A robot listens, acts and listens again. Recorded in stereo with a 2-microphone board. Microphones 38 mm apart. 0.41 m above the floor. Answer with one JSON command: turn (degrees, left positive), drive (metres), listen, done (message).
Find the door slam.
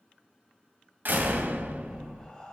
{"turn": -70}
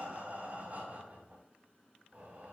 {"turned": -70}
{"listen": true}
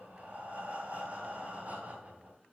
{"done": "I heard a door slam, but can't make it out now. It was about straight ahead or 40° right."}